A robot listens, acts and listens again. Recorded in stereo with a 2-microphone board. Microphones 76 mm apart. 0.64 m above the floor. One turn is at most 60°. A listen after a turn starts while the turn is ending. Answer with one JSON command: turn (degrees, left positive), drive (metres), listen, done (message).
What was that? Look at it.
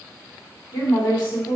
{"turn": 60}
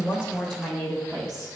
{"done": "Found it: a woman speaking, straight ahead."}